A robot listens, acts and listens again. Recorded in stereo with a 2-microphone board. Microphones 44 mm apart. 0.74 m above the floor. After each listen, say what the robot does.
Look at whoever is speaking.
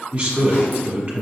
Turn 30° right.
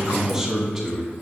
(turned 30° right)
Facing the man speaking.